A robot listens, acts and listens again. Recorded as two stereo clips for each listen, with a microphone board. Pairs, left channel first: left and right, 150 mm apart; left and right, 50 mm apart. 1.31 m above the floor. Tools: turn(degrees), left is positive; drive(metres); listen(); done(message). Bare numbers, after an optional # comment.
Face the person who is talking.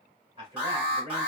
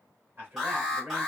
# The man speaking: about 40° right or 140° right.
turn(-40)
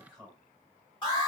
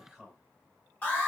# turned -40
done("Facing the man speaking.")